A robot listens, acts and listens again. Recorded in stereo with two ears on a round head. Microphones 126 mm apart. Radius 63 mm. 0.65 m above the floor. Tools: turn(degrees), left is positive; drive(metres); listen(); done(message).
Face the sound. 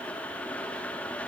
listen()
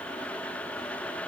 listen()
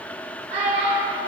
turn(degrees=-50)
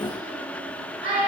turn(degrees=-80)
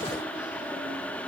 listen()
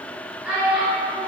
done("Facing the child speaking, 1 to 2 m away.")